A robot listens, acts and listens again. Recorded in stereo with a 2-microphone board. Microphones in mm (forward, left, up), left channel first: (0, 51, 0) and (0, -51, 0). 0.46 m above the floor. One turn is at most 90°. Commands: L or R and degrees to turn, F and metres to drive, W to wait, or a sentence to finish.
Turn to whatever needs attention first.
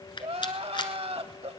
R90
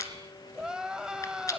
Found it: crying, straight ahead.